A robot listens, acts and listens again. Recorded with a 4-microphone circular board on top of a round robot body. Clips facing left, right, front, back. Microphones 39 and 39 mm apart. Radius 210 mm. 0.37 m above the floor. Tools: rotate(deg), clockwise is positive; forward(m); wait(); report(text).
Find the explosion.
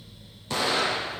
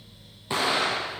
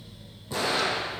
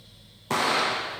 rotate(160)
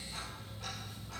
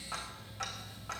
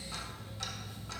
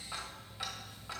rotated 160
report("Facing where the explosion came from. I can't hear it now.")